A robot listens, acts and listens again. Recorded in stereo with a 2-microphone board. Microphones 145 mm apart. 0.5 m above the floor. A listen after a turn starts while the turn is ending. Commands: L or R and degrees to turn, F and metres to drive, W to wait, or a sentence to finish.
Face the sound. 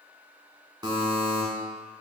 R30
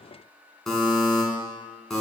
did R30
Facing the buzzer, 1 to 2 m away.